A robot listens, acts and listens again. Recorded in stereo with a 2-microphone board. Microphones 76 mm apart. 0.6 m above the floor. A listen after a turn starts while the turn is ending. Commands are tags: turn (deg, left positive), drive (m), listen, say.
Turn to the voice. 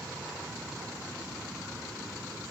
<listen/>
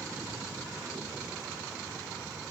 <listen/>
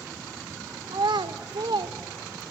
<turn deg="-75"/>
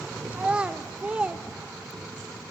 <turn deg="-15"/>
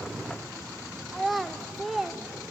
<say>Found it: a child speaking, straight ahead, 1 to 2 m away.</say>